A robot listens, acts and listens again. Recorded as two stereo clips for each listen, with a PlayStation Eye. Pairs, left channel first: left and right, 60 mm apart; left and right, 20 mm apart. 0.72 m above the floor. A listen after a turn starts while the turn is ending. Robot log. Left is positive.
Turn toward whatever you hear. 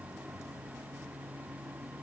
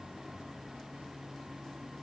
cmd idle
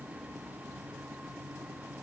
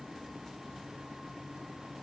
cmd idle
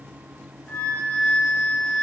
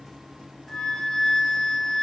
note: The flute: about 25° left or 155° left.
cmd yaw +25
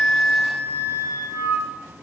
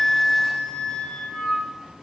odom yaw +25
note: So it is at 130° left.
cmd yaw +130
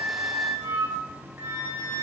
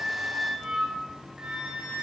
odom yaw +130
note: The flute is now 45° right.
cmd yaw -45
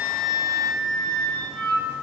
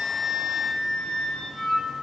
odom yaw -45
note: The flute is now 10° left.
cmd yaw +10
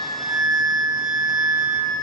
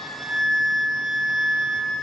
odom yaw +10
end: Found it: a flute, straight ahead, 1 to 2 m away.